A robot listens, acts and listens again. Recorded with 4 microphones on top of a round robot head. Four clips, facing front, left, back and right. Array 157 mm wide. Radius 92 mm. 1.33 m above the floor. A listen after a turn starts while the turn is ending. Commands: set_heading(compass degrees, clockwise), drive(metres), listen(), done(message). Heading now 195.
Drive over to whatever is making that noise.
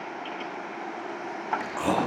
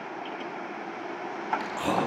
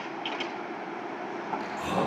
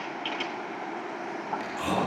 set_heading(175)
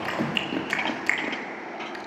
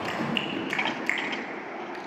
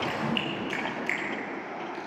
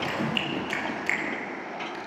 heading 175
drive(1.0)
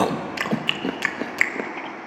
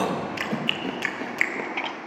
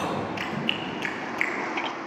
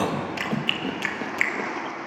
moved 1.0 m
drive(1.0)
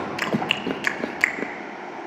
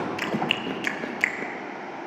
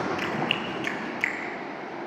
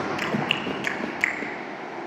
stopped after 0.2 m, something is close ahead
done("I am next to the chewing.")